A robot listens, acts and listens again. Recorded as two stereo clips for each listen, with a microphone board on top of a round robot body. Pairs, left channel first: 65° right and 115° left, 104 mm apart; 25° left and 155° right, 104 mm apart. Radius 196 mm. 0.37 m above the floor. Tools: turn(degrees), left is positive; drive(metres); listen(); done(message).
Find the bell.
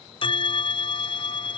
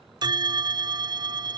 turn(degrees=-105)
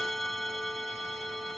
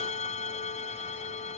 turn(degrees=20)
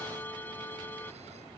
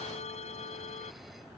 done("Found it: a bell, straight ahead.")